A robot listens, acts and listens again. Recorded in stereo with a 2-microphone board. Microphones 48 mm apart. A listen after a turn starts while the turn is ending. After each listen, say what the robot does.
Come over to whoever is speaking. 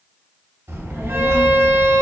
Turn 70° right.
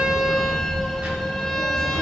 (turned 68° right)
Turn 35° right.
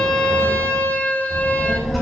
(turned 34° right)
Drive 1.0 m forward.
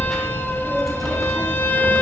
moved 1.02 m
Drive 1.0 m forward.
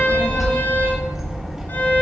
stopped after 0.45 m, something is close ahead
Turn 10° right.
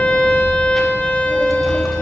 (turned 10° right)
I am next to the child speaking.